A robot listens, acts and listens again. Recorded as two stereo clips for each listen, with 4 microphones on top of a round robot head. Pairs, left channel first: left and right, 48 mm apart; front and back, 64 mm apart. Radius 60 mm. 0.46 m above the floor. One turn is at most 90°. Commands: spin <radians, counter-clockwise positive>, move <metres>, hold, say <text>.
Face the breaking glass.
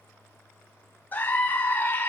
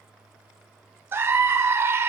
hold
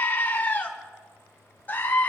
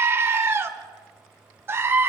hold
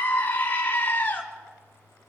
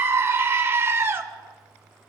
say I can't make out breaking glass, only a scream.